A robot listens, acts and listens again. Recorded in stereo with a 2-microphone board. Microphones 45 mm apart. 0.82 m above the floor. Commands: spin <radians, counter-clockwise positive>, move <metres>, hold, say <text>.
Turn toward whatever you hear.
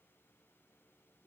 hold
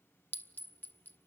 spin 0.79
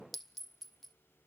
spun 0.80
say Facing the clink, under 1 m away.